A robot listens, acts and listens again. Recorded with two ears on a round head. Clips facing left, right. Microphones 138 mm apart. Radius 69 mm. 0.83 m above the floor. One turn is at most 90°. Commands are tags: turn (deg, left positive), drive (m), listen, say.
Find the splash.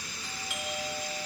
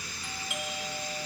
<listen/>
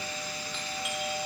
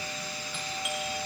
<listen/>
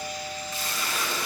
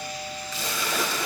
<turn deg="-65"/>
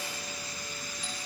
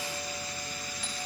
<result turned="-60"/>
<listen/>
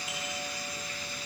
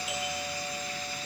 <say>I heard a splash, but can't make it out now. It was about 5° right or 55° right.</say>